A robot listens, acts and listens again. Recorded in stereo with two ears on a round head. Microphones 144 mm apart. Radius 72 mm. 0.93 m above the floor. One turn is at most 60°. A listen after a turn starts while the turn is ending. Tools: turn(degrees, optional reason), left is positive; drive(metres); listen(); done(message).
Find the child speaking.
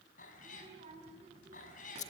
turn(degrees=-40, reason="The child speaking: about 40° right or 140° right.")
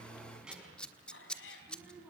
turn(degrees=-10, reason="So it is at 10° right.")
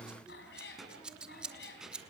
done("Found it: a child speaking, straight ahead.")